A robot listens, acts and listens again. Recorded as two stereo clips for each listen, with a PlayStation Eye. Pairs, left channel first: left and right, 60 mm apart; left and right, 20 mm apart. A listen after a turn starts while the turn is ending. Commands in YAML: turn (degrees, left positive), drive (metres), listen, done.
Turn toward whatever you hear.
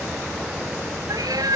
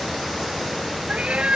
turn: -90
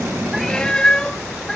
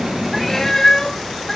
turn: 10
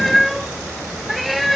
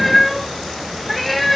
done: "Found it: a cat meowing, straight ahead."